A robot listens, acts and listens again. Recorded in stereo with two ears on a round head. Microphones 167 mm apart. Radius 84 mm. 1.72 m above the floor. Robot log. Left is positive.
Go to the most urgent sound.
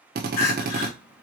note: The crying: about 60° left or 120° left.
cmd yaw +60
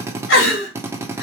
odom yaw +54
note: So it is at 70° left.
cmd yaw +70
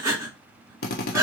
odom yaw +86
note: The crying is now 20° right.
cmd yaw -20
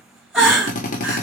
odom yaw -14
cmd fwd 1.0
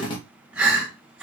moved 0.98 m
cmd fwd 1.0
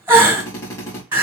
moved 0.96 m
note: The crying is now 10° right.
cmd yaw -10
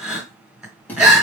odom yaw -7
cmd fwd 1.0
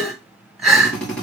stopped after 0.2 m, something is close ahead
end: Arrived at the crying, straight ahead.